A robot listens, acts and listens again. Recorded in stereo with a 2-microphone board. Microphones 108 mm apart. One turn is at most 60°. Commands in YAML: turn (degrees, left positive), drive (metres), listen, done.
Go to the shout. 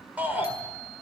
turn: -15
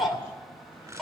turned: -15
drive: 1.0
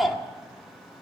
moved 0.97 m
drive: 1.0
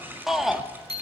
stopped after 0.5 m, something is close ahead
done: "I am next to the shout."